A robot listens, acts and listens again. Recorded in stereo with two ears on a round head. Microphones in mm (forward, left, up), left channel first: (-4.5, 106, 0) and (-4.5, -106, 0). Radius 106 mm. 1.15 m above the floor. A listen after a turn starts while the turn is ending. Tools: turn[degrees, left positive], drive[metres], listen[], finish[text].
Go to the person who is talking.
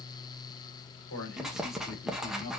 Thought: The man speaking: about 60° left or 120° left.
Action: turn[60]
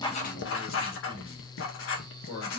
Thought: So it is at 60° left.
Action: turn[60]
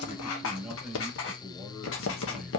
Action: drive[1.0]
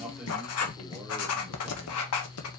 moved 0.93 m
Action: listen[]
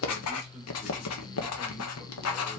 Action: listen[]
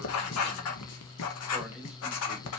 Action: finish[I heard a man speaking from this way, but can't make it out now. I did not reach it.]